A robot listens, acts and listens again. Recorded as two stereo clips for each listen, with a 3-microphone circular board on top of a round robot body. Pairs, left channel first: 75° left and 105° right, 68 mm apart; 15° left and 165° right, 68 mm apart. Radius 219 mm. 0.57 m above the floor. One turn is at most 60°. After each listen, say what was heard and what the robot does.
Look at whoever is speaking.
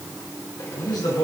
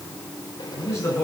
The man speaking: 65° left. Turn 60° left.
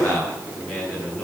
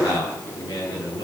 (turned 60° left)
Facing the man speaking.